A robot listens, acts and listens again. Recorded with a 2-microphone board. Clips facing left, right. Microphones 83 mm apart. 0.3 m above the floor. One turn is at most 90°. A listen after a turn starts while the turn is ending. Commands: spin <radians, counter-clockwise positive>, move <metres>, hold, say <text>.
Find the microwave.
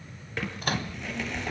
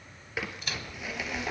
spin 0.87
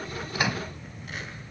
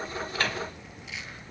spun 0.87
spin 0.17
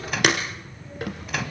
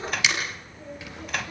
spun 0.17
say Found it: a microwave, straight ahead, 1 to 2 m away.